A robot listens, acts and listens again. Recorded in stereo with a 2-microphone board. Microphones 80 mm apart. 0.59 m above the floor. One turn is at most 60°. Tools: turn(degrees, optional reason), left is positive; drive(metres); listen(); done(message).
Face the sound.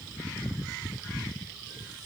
listen()
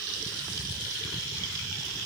listen()
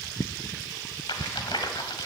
turn(degrees=60, reason="The rattle: about 70° left or 110° left.")
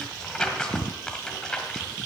turn(degrees=10, reason="So it is at 10° left.")
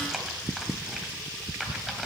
done("Facing the rattle.")